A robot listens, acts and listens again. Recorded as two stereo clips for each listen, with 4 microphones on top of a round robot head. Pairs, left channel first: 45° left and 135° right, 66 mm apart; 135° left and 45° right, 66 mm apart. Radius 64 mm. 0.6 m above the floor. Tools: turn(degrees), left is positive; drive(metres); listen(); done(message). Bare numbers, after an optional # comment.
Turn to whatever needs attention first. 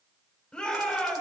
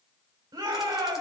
# The shout: 30° right.
turn(-30)
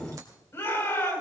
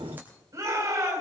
done("Found it: a shout, straight ahead.")